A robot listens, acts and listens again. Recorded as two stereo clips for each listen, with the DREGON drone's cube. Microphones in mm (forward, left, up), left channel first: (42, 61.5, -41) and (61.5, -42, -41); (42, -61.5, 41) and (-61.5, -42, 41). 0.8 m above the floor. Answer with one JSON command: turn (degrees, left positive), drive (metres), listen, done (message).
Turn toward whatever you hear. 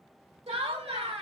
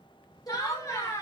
{"turn": -75}
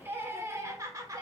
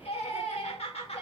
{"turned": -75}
{"turn": -25}
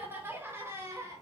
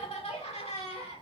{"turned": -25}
{"turn": -20}
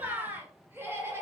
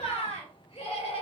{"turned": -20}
{"turn": -15}
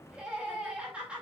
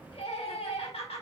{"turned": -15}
{"done": "Found it: laughter, straight ahead."}